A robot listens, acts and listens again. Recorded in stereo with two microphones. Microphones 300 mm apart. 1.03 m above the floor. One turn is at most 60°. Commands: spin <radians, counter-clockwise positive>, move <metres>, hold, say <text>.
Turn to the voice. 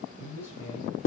spin 1.05
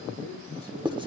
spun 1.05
spin 0.35
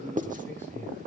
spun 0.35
say Facing the man speaking, over 4 m away.